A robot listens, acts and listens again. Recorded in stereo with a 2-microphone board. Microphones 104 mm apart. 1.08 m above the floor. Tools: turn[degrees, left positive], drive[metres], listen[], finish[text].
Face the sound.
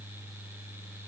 Action: listen[]
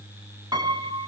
Thought: The piano: about 40° right or 140° right.
Action: turn[-40]
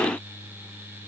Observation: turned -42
Action: listen[]
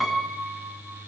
Action: finish[Found it: a piano, straight ahead.]